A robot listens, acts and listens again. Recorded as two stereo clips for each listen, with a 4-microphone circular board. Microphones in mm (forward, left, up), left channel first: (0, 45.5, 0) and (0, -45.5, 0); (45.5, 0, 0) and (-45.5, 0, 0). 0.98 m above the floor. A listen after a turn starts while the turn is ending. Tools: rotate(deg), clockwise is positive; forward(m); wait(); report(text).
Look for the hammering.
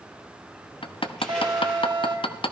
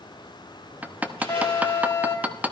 rotate(-110)
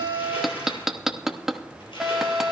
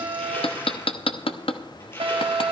report("Found it: hammering, straight ahead, under 1 m away.")